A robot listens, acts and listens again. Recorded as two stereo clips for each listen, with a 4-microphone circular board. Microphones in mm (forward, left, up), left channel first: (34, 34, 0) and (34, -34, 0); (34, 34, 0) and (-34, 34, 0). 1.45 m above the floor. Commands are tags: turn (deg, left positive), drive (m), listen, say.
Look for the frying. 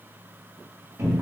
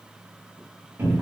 <listen/>
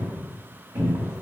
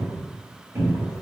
<listen/>
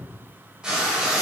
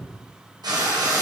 <turn deg="-165"/>
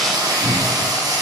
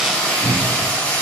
<turn deg="-70"/>
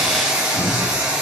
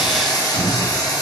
<turn deg="-15"/>
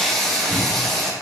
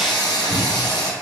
<say>Facing the frying, under 1 m away.</say>